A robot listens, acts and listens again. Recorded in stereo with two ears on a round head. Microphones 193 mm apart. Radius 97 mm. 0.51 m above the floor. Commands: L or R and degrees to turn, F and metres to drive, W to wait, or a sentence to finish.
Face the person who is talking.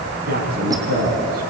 R50
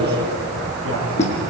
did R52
R80
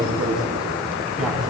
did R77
Facing the man speaking, over 4 m away.